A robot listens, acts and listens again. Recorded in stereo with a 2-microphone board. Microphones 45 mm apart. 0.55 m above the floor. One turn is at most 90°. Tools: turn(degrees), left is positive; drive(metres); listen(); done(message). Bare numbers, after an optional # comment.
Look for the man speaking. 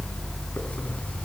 listen()
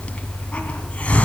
listen()
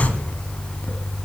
done("I can't make out a man speaking to turn to.")